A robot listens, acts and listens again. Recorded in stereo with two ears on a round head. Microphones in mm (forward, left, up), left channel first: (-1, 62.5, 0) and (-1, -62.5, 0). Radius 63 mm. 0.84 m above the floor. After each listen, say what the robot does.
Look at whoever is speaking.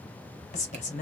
Turn 50° left.
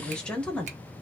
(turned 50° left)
Facing the woman speaking, 1 to 2 m away.